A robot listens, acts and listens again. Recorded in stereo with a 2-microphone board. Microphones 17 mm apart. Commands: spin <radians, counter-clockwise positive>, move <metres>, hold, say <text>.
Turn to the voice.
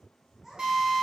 spin -0.52
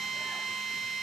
hold
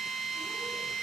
hold
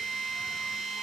say I heard a child speaking, but can't make it out now. It was about 15° left or 135° right.